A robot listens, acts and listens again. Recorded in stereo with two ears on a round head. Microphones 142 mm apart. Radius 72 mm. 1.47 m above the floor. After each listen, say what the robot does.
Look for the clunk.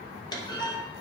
Turn 30° left.
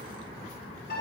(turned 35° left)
Keep listening.
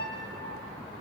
I heard a clunk, but can't make it out now. It was about 5° right or 115° left.